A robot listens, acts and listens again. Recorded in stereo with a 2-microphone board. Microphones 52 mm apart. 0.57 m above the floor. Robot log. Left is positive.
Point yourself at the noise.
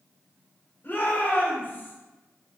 note: The shout: about 40° left or 140° left.
cmd yaw +40
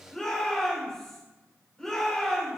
note: So it is at 10° left.
cmd yaw +10
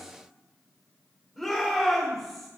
end: Found it: a shout, straight ahead, 2 to 4 m away.